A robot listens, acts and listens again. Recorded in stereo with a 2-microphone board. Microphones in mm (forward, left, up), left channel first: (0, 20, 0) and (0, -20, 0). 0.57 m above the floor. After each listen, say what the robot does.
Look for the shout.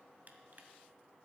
Keep listening.
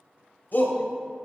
Turn 60° left.
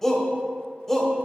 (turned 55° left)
Turn 15° left.
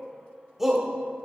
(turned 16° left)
Facing the shout.